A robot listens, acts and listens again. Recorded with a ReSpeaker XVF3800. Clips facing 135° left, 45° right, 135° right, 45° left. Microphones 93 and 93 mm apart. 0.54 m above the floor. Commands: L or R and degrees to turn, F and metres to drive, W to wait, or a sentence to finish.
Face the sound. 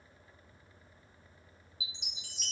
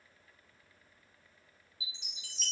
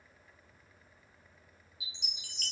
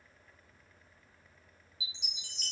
R145
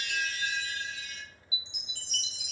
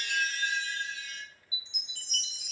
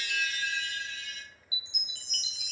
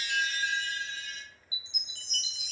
Facing the chime.